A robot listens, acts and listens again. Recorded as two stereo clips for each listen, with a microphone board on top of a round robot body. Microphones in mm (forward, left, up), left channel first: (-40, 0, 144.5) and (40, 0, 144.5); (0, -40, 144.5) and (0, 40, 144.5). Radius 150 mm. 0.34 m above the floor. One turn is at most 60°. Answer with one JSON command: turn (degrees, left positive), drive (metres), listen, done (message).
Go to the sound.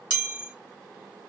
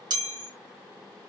{"turn": 60}
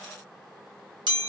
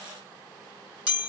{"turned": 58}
{"turn": 15}
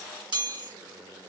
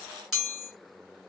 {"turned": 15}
{"drive": 1.0}
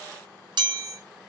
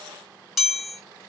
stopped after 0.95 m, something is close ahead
{"done": "Arrived at the chime, straight ahead."}